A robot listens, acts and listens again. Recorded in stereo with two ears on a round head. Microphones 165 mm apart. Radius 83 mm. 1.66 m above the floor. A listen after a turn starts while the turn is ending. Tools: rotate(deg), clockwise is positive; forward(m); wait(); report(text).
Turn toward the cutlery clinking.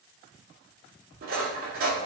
rotate(50)
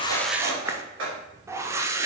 rotate(75)
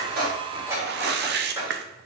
rotate(15)
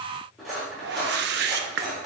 report("Found it: cutlery clinking, straight ahead.")